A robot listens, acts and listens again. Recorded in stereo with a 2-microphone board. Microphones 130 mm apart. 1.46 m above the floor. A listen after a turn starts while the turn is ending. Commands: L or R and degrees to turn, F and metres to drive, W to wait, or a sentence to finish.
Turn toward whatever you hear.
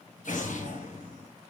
L90
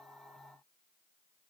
Facing where the explosion came from. I can't hear it now.